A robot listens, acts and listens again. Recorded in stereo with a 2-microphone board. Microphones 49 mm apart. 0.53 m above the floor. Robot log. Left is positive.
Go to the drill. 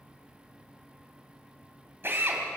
note: The drill: about 50° right or 130° right.
cmd yaw -50
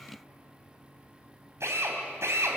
note: So it is at 75° right.
cmd yaw -75
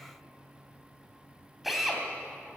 cmd fwd 1.0
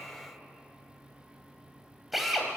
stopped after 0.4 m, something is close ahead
end: Blocked. The drill is further on, straight ahead.